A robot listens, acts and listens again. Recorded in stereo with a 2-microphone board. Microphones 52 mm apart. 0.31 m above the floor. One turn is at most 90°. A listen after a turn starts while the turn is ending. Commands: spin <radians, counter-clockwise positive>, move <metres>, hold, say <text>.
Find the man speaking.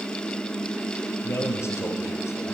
spin 0.96
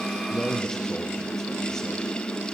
say Facing the man speaking, over 4 m away.